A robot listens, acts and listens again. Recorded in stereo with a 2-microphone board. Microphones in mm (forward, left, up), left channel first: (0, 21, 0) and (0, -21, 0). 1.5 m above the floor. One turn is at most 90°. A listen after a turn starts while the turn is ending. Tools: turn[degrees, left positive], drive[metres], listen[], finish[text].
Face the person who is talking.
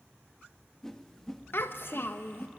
Thought: The child speaking: about 55° left or 125° left.
Action: turn[55]
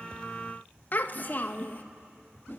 Thought: So it is at 50° left.
Action: turn[50]
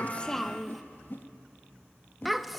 Action: finish[Facing the child speaking, 1 to 2 m away.]